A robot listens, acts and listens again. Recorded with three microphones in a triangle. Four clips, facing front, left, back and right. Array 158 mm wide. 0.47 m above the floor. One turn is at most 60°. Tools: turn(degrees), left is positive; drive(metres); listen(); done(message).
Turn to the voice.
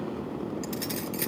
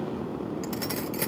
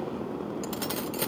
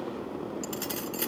listen()
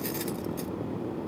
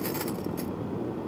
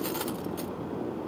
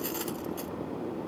listen()
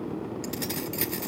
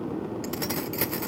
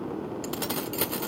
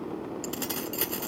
done("I can't make out anyone speaking, only keys jangling.")